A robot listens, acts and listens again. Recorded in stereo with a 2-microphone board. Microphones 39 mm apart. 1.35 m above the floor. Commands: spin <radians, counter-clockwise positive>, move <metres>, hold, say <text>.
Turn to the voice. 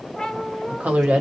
spin -0.70
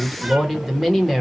say Facing the woman speaking, 1 to 2 m away.